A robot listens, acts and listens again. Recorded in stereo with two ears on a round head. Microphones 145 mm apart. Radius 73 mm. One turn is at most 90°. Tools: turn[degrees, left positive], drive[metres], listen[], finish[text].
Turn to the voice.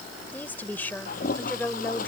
Action: turn[30]
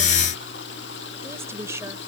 Thought: So it is at 20° right.
Action: turn[-20]
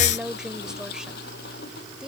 Action: finish[Found it: a woman speaking, straight ahead.]